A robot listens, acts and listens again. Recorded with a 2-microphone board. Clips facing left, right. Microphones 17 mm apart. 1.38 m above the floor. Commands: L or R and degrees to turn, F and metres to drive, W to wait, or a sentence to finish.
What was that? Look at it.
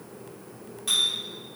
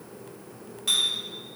R20
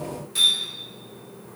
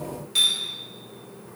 R140
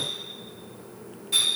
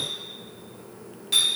R40
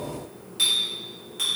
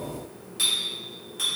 L15
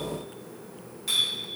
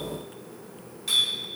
Found it: a clink, straight ahead, 1 to 2 m away.